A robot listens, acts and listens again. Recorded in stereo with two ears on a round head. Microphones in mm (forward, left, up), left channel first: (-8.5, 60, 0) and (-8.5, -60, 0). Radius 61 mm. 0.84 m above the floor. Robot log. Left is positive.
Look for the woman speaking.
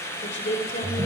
note: The woman speaking: about 55° left or 125° left.
cmd yaw +55
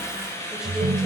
cmd idle
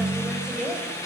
end: Found it: a woman speaking, straight ahead, over 4 m away.